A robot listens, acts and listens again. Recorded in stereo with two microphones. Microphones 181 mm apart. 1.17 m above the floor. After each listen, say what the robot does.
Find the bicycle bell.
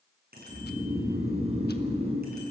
Turn 70° right.
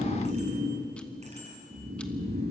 Turn 40° right.
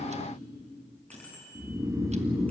Turn 10° left.
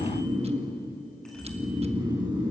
Keep listening.
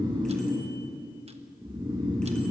Keep listening.
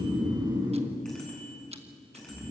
Found it: a bicycle bell, straight ahead, over 4 m away.